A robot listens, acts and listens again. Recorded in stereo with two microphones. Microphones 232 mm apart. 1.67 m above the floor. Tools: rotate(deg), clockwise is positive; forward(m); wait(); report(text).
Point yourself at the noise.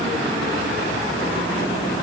wait()
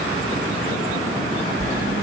rotate(40)
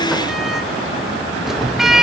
report("Found it: a sliding door, straight ahead.")